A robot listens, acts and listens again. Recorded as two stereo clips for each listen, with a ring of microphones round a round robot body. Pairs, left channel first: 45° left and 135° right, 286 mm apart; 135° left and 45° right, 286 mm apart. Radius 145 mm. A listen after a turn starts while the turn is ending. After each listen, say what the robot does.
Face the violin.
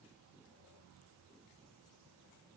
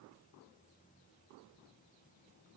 Keep listening.
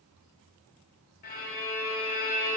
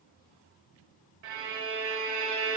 Turn 15° right.
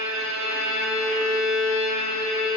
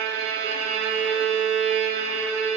Found it: a violin, straight ahead, 1 to 2 m away.